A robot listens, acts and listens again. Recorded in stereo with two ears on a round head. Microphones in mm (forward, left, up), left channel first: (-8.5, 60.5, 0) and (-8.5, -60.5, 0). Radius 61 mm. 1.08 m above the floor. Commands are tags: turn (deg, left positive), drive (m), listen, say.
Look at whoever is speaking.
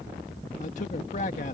<turn deg="65"/>
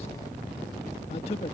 <turn deg="45"/>
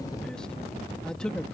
<say>Facing the man speaking.</say>